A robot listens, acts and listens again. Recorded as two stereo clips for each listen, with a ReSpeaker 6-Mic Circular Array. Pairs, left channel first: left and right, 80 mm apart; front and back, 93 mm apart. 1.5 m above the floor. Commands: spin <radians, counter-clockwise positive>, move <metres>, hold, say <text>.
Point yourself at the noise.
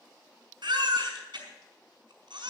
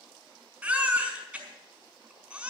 spin -1.83
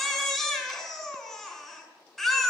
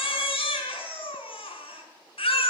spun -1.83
say Facing the baby crying, over 4 m away.